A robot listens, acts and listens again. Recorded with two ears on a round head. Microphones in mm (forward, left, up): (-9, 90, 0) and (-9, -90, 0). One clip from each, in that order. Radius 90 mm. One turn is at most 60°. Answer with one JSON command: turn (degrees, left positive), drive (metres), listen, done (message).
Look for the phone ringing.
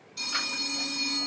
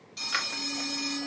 {"turn": -20}
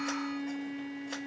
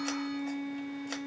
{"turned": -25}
{"listen": true}
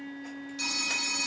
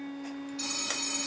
{"done": "Facing the phone ringing, 1 to 2 m away."}